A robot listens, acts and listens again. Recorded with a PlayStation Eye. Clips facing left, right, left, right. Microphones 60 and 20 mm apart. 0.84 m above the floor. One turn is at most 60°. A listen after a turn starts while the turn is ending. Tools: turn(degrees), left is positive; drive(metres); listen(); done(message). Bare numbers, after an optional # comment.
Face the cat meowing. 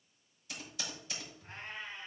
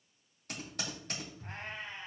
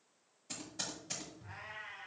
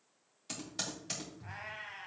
turn(-60)
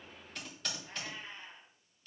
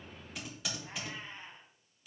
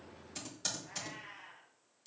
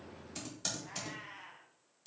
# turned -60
# So it is at 35° right.
turn(-35)
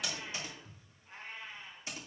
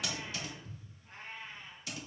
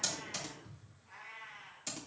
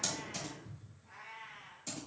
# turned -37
# The cat meowing is now 10° left.
turn(10)
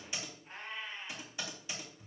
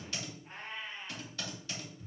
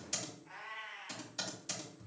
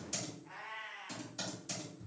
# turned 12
done("Found it: a cat meowing, straight ahead, over 4 m away.")